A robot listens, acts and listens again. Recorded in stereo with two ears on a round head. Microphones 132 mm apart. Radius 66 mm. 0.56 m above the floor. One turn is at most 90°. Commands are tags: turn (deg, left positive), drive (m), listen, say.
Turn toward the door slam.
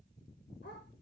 <listen/>
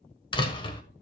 <turn deg="35"/>
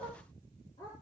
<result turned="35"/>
<listen/>
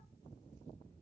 <say>I heard a door slam, but can't make it out now. It was about straight ahead or 110° left.</say>